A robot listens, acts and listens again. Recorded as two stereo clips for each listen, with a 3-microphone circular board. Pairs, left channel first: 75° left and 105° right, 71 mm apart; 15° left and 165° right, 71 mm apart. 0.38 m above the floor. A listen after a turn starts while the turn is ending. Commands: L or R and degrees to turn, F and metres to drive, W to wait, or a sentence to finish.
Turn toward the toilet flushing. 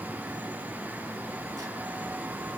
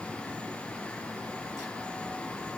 W
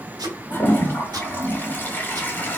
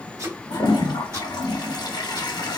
L10
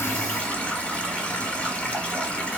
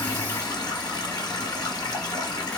Facing the toilet flushing, under 1 m away.